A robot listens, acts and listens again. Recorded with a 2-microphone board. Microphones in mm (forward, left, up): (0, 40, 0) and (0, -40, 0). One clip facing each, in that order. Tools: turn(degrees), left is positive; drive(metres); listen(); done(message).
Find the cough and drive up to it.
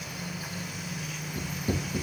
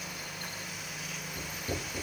listen()
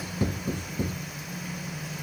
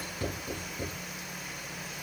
listen()
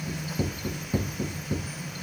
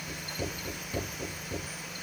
done("I can't make out a cough to turn to.")